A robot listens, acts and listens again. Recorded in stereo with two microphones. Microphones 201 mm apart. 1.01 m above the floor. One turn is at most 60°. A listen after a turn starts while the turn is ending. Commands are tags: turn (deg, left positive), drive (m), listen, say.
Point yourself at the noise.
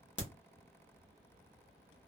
<turn deg="60"/>
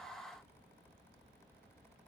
<listen/>
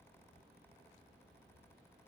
<say>I heard a crack, but can't make it out now. It was about straight ahead or 60° left.</say>